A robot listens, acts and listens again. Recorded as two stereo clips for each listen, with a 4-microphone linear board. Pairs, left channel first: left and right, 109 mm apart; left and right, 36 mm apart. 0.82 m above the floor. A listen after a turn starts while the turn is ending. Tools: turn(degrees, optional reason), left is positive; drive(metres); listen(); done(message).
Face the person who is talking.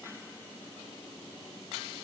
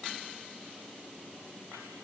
listen()
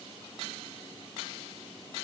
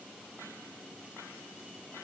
listen()
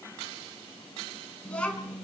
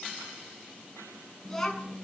turn(degrees=30)
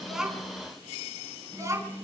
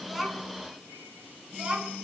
turn(degrees=-30, reason="So it is at 30° right.")
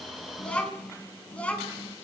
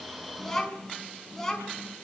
turn(degrees=10, reason="The child speaking is now 10° left.")
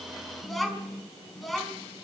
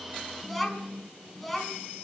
done("Facing the child speaking, over 4 m away.")